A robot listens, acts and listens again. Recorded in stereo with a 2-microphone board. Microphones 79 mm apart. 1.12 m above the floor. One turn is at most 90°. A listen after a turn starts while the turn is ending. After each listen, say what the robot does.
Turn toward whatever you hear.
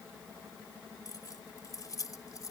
Turn 45° left.
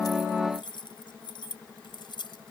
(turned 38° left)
Turn 90° left.
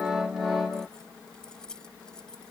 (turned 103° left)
Turn 10° left.
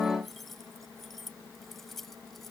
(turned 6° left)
Facing the keys jangling.